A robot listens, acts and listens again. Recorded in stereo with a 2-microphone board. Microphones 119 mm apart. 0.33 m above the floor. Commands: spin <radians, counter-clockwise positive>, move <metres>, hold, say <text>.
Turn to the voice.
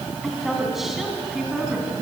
spin -0.52
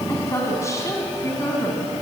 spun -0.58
spin 0.44
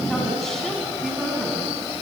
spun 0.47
hold
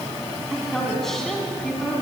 say Found it: a woman speaking, straight ahead, 2 to 4 m away.